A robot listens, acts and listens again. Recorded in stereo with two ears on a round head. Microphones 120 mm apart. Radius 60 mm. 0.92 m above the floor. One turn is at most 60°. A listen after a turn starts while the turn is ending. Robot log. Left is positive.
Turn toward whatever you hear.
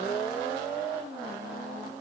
cmd idle
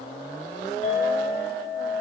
note: The clink: about 65° left or 115° left.
cmd yaw +60
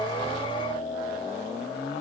note: So it is at 55° left.
cmd yaw +55
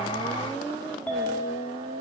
note: The clink is now 10° left.
cmd yaw +10
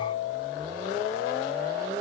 end: Facing the clink, 2 to 4 m away.